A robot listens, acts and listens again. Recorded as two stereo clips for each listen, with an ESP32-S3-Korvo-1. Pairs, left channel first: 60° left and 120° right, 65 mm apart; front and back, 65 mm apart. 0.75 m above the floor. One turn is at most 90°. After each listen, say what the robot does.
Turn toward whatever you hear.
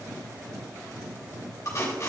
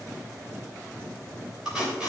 Turn 90° left.
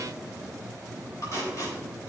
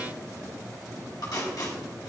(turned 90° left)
Turn 20° left.
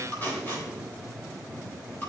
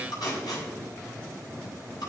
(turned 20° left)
Facing the tape being pulled, 2 to 4 m away.